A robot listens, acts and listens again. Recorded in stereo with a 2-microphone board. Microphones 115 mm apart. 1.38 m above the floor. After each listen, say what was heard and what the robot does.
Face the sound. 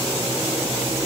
Keep listening.
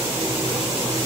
Keep listening.
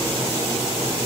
I can't make out anything to turn to.